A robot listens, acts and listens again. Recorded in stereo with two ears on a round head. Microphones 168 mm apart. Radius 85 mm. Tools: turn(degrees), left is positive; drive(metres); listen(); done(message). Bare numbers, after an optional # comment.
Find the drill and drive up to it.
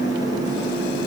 listen()
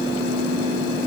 listen()
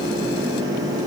done("I can't make out a drill.")